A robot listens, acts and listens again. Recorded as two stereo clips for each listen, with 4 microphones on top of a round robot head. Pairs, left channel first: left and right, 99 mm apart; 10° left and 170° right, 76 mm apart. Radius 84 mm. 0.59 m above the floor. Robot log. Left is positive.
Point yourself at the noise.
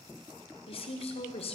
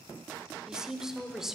note: The woman speaking: 105° left.
cmd yaw +105
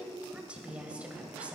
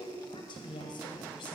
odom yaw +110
note: The woman speaking is now 15° right.
cmd yaw -15
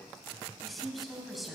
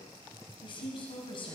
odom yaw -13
end: Found it: a woman speaking, straight ahead, over 4 m away.